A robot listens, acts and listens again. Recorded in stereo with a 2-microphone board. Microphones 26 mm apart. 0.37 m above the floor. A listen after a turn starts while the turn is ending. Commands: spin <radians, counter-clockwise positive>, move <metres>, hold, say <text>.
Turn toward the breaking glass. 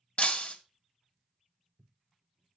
spin 0.79
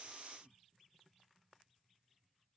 hold
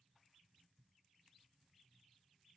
say I heard breaking glass, but can't make it out now. It was about straight ahead or 90° left.